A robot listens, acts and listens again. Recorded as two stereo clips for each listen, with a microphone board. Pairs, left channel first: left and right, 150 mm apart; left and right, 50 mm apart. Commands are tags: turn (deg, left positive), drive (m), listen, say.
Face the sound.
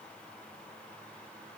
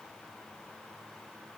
<listen/>
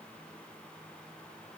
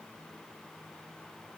<listen/>
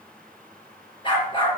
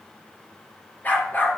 <turn deg="35"/>
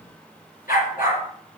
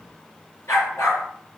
<turn deg="110"/>
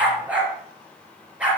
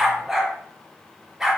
<turn deg="-10"/>
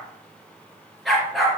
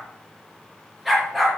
<say>Facing the dog barking, over 4 m away.</say>